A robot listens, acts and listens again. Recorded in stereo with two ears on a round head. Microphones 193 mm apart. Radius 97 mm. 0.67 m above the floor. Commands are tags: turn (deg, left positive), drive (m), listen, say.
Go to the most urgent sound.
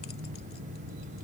<listen/>
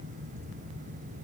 <listen/>
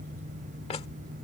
<say>I can't make out anything urgent to turn to.</say>